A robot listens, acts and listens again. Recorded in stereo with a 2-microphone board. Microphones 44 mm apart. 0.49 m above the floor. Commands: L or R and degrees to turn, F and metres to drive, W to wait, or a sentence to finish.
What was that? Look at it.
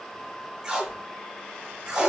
R30
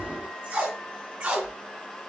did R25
R140
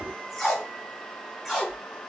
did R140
Found it: tape being pulled, straight ahead.